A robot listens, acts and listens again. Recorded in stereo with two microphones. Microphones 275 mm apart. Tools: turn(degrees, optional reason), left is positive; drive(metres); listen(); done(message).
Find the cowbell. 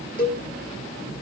turn(degrees=30, reason="The cowbell: about 30° left or 150° left.")
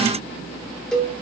done("Found it: a cowbell, straight ahead, 1 to 2 m away.")